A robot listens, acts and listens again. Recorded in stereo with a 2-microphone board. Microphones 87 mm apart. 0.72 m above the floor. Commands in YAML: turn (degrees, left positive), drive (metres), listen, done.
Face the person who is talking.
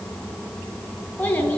turn: 20
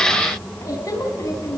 turn: 140
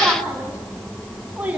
turn: -15
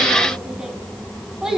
turn: -10
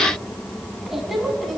done: "Found it: a child speaking, straight ahead."